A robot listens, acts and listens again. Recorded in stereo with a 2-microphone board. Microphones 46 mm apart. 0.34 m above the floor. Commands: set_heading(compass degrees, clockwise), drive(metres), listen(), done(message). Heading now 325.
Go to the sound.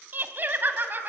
set_heading(15)
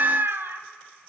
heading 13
set_heading(88)
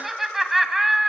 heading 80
drive(1.0)
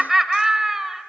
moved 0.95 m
set_heading(90)
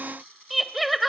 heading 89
drive(1.0)
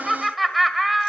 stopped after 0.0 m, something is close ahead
done("Arrived at the laughter, straight ahead.")